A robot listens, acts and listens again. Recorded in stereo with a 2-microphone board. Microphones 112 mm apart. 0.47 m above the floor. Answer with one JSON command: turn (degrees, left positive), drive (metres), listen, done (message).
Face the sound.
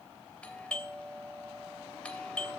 {"turn": 30}
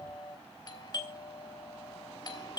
{"turn": 135}
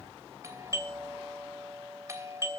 {"turn": -30}
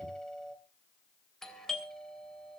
{"done": "Found it: a doorbell, straight ahead."}